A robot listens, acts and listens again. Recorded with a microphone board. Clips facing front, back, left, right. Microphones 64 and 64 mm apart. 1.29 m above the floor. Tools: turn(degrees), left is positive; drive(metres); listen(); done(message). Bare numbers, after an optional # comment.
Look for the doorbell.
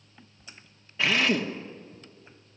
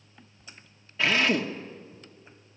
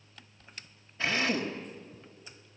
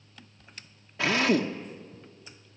listen()
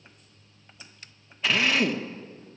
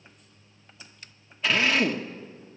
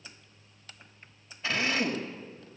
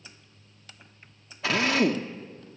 listen()
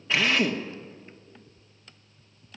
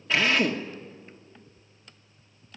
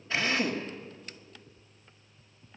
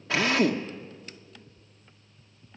done("I can't make out a doorbell, only a drill.")